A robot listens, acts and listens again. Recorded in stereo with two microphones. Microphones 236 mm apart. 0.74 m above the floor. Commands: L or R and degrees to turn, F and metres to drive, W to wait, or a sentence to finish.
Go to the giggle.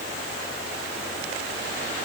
W
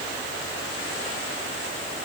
W
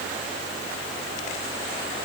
I can't make out a giggle to turn to.